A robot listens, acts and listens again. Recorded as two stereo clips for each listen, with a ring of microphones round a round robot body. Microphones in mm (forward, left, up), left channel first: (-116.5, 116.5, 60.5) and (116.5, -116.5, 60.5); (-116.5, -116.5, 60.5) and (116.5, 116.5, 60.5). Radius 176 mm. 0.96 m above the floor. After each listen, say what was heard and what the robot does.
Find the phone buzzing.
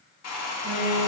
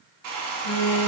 The phone buzzing: 155° right. Turn 155° right.
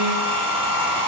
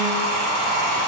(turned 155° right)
Keep listening.
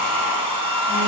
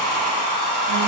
Keep listening.
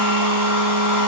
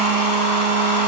I heard a phone buzzing from this way, but can't make it out now.